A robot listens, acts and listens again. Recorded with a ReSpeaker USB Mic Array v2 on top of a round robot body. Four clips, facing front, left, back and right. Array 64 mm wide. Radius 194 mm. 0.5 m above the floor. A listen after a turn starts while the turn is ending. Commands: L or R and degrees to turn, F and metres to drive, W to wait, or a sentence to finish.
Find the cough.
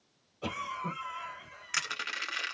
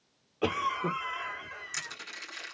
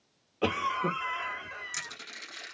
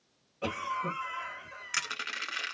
L145
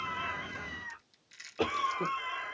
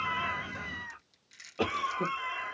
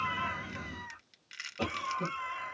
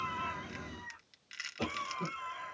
L55
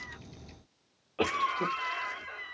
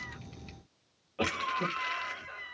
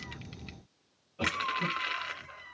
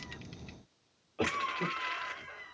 L10
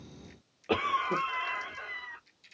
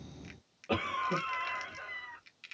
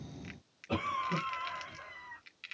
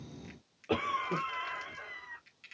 Facing the cough, 1 to 2 m away.